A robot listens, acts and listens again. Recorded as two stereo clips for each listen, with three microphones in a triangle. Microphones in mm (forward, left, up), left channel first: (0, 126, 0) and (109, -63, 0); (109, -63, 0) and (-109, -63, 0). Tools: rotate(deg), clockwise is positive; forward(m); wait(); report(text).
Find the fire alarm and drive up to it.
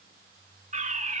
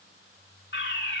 rotate(10)
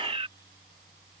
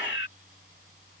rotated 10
forward(1.0)
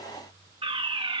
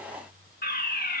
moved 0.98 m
forward(1.0)
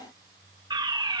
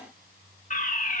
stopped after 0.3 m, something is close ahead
report("Arrived at the fire alarm, straight ahead.")